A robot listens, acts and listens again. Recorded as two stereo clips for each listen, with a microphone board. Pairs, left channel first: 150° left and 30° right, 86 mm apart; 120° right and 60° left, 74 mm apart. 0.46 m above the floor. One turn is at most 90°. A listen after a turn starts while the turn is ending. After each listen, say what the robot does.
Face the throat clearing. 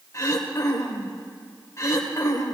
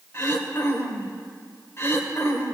Turn 90° right.
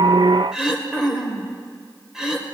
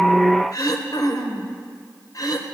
Turn 90° right.
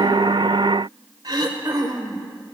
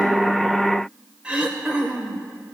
Turn 10° right.
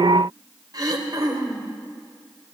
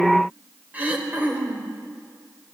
Found it: throat clearing, straight ahead.